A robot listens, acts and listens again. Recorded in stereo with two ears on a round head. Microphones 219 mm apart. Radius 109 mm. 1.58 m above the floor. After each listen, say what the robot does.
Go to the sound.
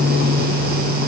Keep listening.
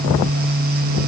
Keep listening.
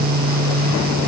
I can't make out anything to turn to.